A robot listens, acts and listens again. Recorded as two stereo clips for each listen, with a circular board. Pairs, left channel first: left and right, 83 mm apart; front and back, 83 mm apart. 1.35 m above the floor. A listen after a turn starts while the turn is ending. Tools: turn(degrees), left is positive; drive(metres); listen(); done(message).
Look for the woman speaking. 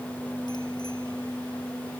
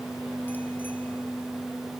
listen()
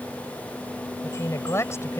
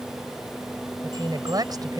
turn(degrees=145)
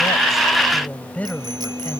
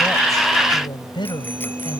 turn(degrees=20)
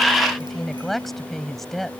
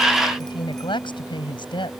done("Facing the woman speaking.")